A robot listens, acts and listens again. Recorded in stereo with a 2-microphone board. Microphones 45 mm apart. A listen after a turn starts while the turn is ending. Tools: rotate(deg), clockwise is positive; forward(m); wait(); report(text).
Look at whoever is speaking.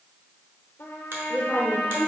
rotate(30)
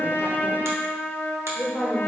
rotate(-15)
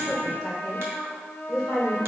report("Found it: a woman speaking, straight ahead, 1 to 2 m away.")